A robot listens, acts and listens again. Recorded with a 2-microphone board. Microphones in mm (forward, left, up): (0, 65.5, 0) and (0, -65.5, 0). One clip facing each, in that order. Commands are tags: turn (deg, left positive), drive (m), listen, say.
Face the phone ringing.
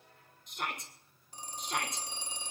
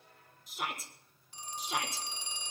<turn deg="40"/>
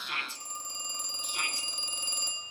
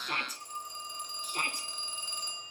<turn deg="100"/>
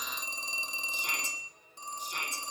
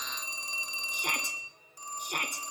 <turn deg="25"/>
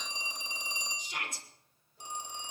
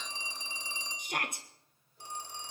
<turn deg="20"/>
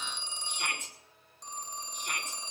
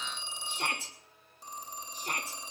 <say>Facing the phone ringing.</say>